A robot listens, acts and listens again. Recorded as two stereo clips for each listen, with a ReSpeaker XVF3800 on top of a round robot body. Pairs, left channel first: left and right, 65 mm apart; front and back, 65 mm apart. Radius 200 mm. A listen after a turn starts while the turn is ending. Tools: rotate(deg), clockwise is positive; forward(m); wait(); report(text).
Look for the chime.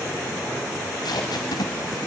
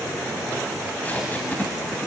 wait()
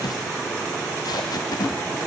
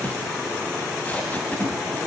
wait()
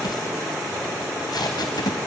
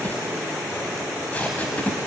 report("I can't make out a chime to turn to.")